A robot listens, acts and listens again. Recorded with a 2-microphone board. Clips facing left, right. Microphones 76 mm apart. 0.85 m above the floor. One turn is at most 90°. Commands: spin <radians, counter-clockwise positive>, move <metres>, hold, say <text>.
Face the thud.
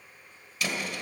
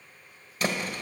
spin -0.70
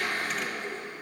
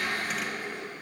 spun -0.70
hold
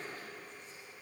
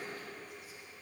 say I heard a thud, but can't make it out now. It was about straight ahead or 100° right.